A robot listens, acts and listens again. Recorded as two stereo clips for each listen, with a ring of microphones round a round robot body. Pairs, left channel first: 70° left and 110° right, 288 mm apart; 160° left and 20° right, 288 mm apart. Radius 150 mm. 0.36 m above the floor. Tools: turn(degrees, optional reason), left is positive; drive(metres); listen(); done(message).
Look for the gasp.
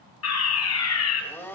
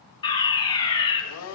listen()
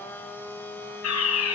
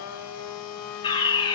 listen()
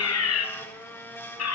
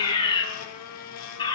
done("I can't make out a gasp to turn to.")